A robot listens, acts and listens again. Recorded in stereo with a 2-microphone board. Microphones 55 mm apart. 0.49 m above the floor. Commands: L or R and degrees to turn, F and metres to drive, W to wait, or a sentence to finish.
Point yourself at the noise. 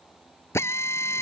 L50
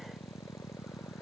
W
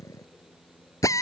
L75
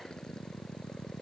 W
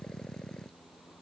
W
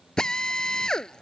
L15
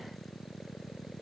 W
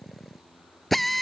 Found it: a drill, straight ahead.